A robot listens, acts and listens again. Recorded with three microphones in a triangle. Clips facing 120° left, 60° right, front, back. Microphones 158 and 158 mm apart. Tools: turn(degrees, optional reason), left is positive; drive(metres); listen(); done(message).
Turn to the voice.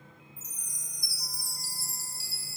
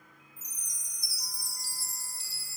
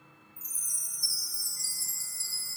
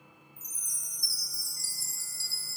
listen()
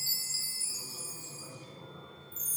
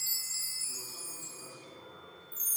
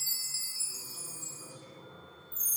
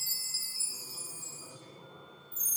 turn(degrees=-130, reason="The man speaking: 130° right.")
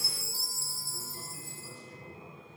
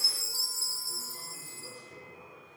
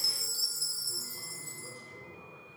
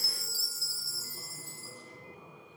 turn(degrees=-25, reason="The man speaking is now 25° right.")
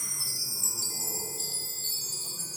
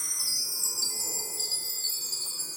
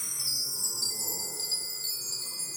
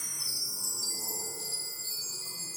listen()
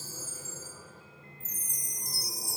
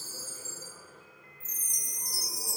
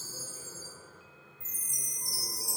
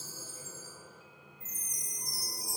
listen()
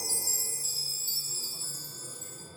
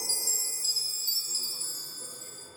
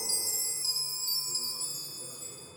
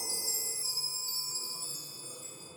turn(degrees=10, reason="The man speaking is now 10° left.")
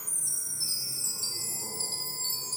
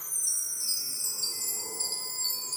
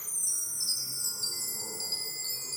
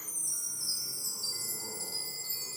listen()
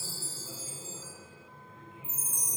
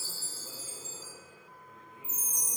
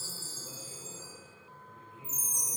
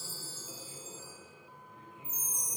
done("Found it: a man speaking, straight ahead, over 4 m away.")